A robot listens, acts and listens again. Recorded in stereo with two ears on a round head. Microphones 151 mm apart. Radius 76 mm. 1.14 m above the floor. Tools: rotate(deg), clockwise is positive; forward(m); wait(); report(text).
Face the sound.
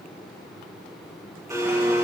rotate(20)
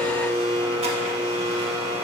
rotate(140)
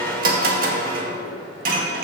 rotate(55)
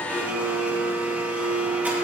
rotate(10)
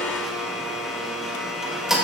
report("Found it: a blender, straight ahead, 1 to 2 m away.")